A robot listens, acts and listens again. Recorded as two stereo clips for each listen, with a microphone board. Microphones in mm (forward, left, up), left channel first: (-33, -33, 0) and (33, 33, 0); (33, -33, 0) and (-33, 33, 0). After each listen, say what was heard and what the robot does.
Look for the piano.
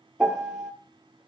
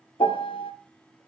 The piano: 40° right. Turn 40° right.
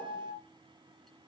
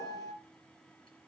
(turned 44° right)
Facing the piano.